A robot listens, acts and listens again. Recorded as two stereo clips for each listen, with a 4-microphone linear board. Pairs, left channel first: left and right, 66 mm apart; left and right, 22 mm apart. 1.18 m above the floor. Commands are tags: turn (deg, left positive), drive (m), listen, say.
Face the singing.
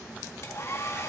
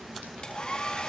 <listen/>
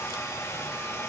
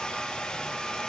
<listen/>
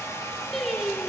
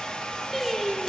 <turn deg="30"/>
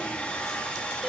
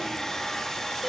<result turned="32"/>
<listen/>
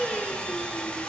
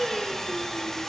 <turn deg="-10"/>
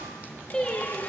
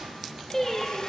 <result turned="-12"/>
<turn deg="15"/>
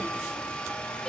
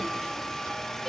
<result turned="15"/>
<listen/>
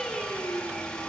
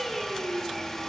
<say>Found it: singing, straight ahead, over 4 m away.</say>